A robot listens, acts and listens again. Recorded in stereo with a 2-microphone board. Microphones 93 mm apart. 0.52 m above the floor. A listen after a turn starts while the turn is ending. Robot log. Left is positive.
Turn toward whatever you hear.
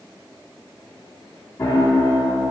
note: The piano: about 30° left or 150° left.
cmd yaw +30
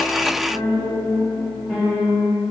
end: Facing the piano.